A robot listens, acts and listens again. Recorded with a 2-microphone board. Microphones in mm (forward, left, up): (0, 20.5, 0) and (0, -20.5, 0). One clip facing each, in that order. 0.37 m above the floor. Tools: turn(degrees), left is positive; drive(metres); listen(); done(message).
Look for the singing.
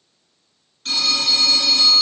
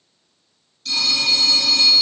listen()
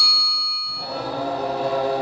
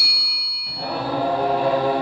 turn(degrees=-35)
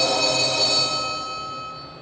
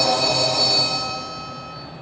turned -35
turn(degrees=-110)
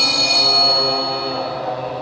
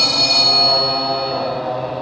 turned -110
done("Facing the singing.")